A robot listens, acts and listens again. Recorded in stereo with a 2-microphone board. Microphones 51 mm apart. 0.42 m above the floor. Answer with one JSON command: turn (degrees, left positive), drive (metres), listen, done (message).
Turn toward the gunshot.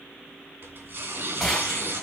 {"turn": 30}
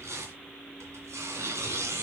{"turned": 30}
{"listen": true}
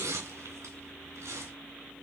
{"done": "I heard a gunshot, but can't make it out now. It was about 30° right or 150° left."}